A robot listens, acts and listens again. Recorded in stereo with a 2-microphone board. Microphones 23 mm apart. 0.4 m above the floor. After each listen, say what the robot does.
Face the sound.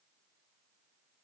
Keep listening.
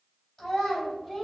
Turn 20° left.
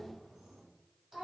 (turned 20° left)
Turn 10° right.
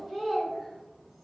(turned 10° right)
Found it: a child speaking, straight ahead.